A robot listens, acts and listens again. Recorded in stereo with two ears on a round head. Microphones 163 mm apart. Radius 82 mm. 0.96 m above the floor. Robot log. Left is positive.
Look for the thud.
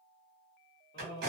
cmd idle
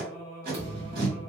note: The thud: about 30° right or 150° right.
cmd yaw -30
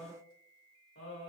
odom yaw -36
cmd idle
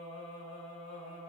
end: I heard a thud, but can't make it out now. It was about 5° left or 115° right.